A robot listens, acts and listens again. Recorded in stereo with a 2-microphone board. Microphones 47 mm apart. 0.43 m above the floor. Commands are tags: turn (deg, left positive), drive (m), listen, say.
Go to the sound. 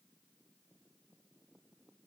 <listen/>
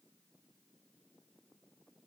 <listen/>
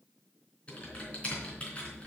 <turn deg="30"/>
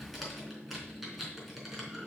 <drive m="1.0"/>
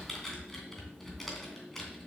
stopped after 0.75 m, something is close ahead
<say>Blocked. The typing on a keyboard is further on, straight ahead.</say>